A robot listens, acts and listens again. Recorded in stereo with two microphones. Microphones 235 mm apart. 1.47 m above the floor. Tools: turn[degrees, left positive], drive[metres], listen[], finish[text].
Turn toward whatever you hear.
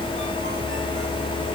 Action: listen[]
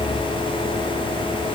Action: listen[]
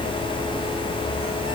Action: finish[I can't make out anything.]